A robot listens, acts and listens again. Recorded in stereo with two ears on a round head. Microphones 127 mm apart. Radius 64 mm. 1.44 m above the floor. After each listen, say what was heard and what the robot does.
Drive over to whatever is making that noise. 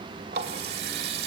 Turn 90° right.
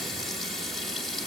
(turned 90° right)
Drive 1.0 m forward.
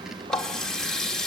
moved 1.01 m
Drive 1.0 m forward.
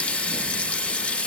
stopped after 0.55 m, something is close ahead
The running tap is now 10° left. Turn 10° left.
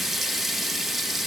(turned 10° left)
I am next to the running tap.